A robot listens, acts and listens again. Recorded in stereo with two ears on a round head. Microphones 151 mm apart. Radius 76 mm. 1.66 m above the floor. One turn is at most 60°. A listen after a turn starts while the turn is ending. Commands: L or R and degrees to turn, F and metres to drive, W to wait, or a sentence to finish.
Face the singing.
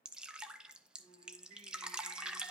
R35
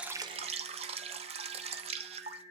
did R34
R60
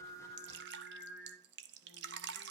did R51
R60
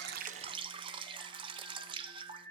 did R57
Found it: singing, straight ahead, over 4 m away.